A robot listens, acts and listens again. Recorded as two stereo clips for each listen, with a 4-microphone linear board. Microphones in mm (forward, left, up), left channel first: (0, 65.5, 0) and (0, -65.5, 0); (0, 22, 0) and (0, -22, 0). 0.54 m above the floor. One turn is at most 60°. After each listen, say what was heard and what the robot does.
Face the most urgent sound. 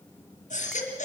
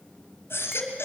The baby crying: about 65° left or 115° left. Turn 60° left.
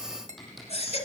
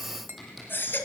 So it is at 55° left. Turn 55° left.
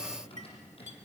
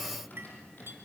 Keep listening.
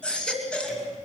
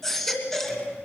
The baby crying is now 10° left. Turn 10° left.
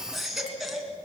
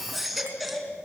Found it: a baby crying, straight ahead.